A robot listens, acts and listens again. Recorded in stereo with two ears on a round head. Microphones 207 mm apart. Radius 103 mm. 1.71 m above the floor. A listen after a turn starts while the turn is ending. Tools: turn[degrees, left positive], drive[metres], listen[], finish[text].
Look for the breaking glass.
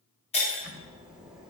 Thought: The breaking glass: about 25° left or 155° left.
Action: turn[25]
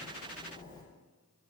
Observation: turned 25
Action: listen[]
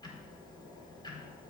Action: finish[I heard breaking glass, but can't make it out now. It was about straight ahead or 130° left.]